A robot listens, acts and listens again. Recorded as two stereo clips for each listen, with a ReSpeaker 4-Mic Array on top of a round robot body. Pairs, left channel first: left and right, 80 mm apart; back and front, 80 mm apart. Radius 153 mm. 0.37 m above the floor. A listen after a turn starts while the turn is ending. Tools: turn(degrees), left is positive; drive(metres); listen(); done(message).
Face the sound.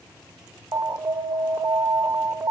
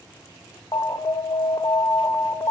turn(degrees=-145)
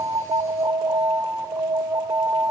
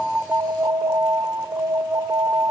turn(degrees=-45)
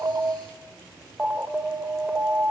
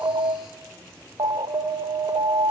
turn(degrees=-20)
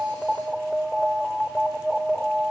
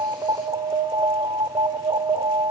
done("Found it: an alarm, straight ahead, 1 to 2 m away.")